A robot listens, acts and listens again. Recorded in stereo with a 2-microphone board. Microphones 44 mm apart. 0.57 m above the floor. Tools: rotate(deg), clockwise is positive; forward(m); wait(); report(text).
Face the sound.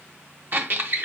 rotate(45)
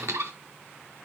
rotate(90)
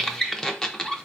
rotate(-10)
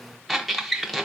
report("Facing the squeak, under 1 m away.")